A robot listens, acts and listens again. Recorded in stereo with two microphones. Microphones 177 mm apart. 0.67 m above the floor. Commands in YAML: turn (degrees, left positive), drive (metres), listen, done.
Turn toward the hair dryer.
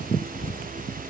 listen: true
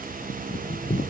listen: true
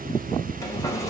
turn: 20
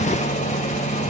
turn: 140
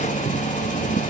turn: 45
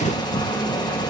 turn: 25
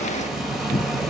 done: "Found it: a hair dryer, straight ahead."